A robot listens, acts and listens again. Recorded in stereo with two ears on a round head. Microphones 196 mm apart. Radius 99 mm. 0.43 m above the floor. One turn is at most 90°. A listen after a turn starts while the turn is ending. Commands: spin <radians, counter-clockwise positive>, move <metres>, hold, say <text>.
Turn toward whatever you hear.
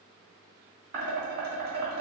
spin -0.79
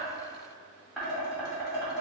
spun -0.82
say Found it: dishes clattering, straight ahead, 1 to 2 m away.